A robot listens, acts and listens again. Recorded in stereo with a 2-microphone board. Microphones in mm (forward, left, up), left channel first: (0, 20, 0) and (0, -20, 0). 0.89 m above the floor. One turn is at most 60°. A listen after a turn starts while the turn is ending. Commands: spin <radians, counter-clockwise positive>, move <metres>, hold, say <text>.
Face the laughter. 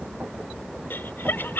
spin 1.05
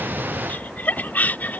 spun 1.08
spin 0.87
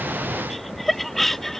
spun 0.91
say Facing the laughter.